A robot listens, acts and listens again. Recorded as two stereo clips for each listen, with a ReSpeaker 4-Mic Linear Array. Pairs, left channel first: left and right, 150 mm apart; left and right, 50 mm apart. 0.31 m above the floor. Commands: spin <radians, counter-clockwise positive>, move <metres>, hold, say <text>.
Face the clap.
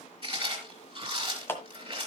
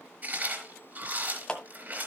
spin 0.26
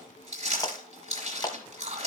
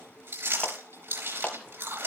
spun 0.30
spin 2.62
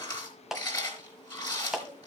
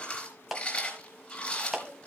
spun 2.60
say Found it: a clap, straight ahead, 1 to 2 m away.